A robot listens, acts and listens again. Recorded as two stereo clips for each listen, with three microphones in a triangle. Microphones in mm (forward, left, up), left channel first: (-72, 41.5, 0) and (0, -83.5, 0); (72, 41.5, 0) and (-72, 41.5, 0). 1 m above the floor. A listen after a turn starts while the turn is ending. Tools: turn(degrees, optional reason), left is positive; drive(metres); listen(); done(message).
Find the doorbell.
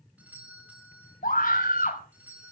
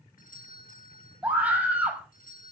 turn(degrees=20, reason="The doorbell: 20° left.")
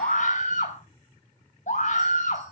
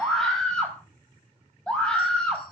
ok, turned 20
listen()
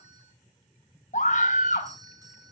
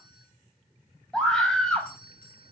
done("Found it: a doorbell, straight ahead, over 4 m away.")